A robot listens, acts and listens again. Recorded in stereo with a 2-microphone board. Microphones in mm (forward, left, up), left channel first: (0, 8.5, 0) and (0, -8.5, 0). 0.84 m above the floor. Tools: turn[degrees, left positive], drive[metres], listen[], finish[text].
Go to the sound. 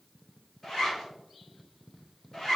Thought: The zipper: about 30° left or 150° left.
Action: turn[30]
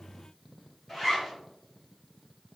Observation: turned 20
Thought: So it is at 10° left.
Action: turn[10]
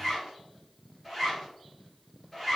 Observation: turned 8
Action: drive[1.0]
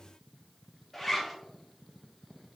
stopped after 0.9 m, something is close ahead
Thought: The zipper is now 15° left.
Action: turn[15]
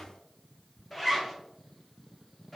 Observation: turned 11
Action: finish[Arrived at the zipper, straight ahead.]